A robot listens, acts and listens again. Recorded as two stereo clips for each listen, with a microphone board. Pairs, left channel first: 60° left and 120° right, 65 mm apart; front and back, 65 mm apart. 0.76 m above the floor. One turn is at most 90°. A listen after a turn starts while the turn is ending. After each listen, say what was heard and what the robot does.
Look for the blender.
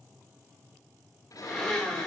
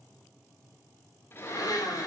The blender: 20° right. Turn 20° right.
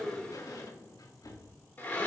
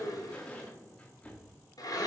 Facing the blender, 2 to 4 m away.